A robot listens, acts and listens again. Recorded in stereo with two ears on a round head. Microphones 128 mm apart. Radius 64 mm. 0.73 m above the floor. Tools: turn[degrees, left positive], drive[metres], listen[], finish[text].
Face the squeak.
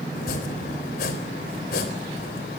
Action: listen[]
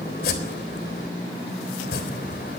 Action: listen[]
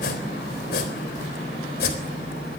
Action: finish[I can't make out a squeak to turn to.]